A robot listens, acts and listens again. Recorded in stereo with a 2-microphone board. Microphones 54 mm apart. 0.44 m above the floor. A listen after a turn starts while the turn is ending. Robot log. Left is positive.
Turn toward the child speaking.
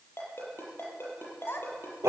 note: The child speaking: about 45° left or 135° left.
cmd yaw +45
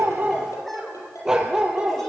cmd idle
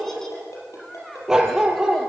note: So it is at 10° left.
cmd yaw +10
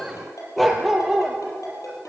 cmd idle
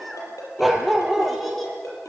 end: Found it: a child speaking, straight ahead.